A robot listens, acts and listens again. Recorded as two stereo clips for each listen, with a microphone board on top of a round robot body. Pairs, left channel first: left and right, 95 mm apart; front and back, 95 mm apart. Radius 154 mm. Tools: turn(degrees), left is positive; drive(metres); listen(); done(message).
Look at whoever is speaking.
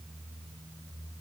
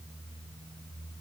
listen()
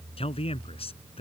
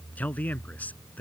turn(degrees=75)
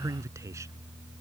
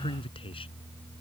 turn(degrees=-30)
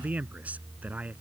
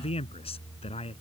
turn(degrees=-15)
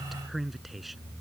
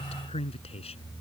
done("Found it: a man speaking, straight ahead.")